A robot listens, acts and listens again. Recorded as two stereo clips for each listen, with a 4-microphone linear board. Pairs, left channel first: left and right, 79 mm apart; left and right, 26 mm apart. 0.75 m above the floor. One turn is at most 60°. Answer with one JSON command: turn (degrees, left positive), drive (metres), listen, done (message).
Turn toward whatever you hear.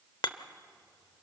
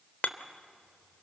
{"turn": 60}
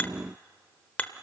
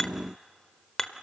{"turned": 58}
{"turn": 20}
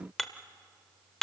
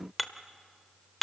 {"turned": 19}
{"done": "Found it: hammering, straight ahead."}